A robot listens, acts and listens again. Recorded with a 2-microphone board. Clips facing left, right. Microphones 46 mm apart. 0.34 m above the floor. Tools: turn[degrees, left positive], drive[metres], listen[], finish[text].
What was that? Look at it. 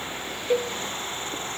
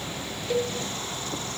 Thought: The cowbell: about 25° left or 155° left.
Action: turn[25]
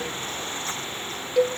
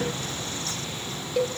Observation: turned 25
Action: finish[Facing the cowbell, 1 to 2 m away.]